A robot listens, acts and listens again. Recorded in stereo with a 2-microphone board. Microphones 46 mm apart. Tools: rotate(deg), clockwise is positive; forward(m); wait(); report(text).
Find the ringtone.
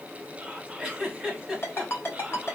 rotate(-55)
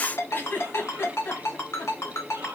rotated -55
rotate(-70)
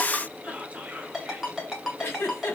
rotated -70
report("Facing the ringtone.")